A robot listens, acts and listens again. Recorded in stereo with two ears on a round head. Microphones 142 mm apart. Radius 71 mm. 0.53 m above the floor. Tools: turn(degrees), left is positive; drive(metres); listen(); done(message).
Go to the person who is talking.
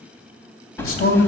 turn(degrees=60)
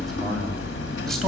listen()
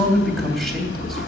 drive(metres=1.0)
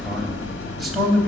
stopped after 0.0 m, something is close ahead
done("Blocked. The man speaking is further on, straight ahead.")